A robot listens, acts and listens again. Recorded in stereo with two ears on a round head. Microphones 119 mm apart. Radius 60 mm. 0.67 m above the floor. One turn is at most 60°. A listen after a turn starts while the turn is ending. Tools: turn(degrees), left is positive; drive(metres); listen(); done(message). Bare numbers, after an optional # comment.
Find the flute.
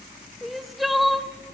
listen()
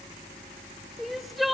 listen()
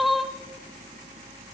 done("I can't make out a flute to turn to.")